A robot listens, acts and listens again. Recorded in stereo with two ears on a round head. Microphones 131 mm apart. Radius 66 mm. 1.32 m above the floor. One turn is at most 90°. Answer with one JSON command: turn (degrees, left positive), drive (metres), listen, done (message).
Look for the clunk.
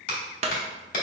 {"turn": -45}
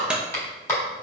{"turn": -10}
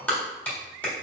{"done": "Facing where the clunk came from. I can't hear it now."}